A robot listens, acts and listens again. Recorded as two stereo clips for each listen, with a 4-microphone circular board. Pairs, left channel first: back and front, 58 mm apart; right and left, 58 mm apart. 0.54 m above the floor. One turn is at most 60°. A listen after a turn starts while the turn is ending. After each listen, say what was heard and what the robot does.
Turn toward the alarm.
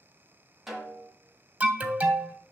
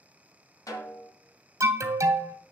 The alarm: 70° left. Turn 60° left.
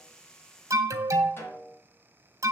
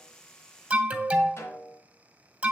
The alarm is now 25° left. Turn 25° left.
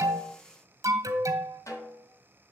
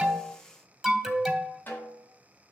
Found it: an alarm, straight ahead, under 1 m away.